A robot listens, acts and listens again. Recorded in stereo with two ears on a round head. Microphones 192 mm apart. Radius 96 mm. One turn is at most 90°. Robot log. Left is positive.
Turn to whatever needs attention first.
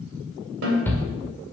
cmd yaw +30
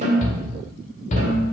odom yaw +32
note: So it is at 135° left.
cmd yaw +90
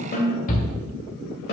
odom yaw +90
note: The shout is now 45° left.
cmd yaw +45
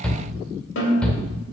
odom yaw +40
end: Facing the shout.